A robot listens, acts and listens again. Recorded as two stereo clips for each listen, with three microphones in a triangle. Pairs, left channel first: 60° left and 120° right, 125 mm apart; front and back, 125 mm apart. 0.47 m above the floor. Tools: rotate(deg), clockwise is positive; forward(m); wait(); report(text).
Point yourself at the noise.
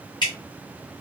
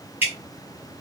rotate(-105)
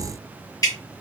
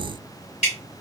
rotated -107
report("Found it: dripping, straight ahead, 1 to 2 m away.")